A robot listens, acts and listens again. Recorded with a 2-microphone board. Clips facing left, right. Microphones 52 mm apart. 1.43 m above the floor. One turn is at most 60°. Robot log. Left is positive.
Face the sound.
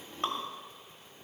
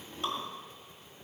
note: The dripping: about 45° left or 135° left.
cmd yaw +45
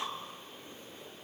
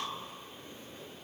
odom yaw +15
cmd idle
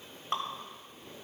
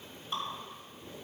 note: So it is at 125° left.
cmd yaw +60
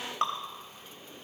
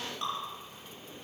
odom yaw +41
note: The dripping is now 75° left.
cmd yaw +60
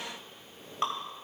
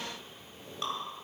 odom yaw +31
note: The dripping is now 40° left.
cmd yaw +40
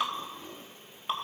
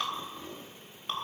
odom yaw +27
note: The dripping is now 15° left.
cmd yaw +15
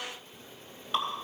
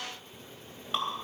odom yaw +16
end: Found it: dripping, straight ahead.